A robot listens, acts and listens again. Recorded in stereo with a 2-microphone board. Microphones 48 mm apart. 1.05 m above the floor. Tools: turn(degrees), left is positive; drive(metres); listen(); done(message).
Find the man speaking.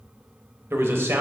turn(degrees=-65)
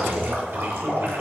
turn(degrees=-55)
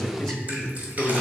turn(degrees=10)
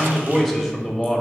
done("Found it: a man speaking, straight ahead.")